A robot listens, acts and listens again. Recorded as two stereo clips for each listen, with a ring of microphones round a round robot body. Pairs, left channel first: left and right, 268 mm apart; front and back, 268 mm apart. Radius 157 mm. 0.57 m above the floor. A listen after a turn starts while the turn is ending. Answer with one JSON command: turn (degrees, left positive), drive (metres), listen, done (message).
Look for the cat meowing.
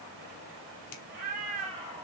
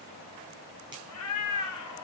{"turn": -15}
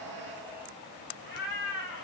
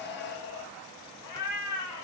{"turn": 40}
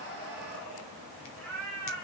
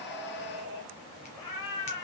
{"turn": 10}
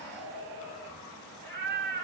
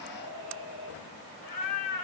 {"turn": 10}
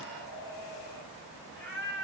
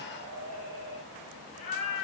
{"done": "Found it: a cat meowing, straight ahead."}